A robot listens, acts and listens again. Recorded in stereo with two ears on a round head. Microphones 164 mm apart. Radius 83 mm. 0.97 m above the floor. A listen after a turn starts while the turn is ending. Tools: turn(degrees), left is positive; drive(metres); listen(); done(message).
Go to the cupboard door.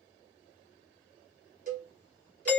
listen()
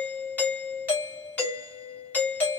listen()
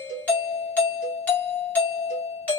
done("I can't make out a cupboard door to turn to.")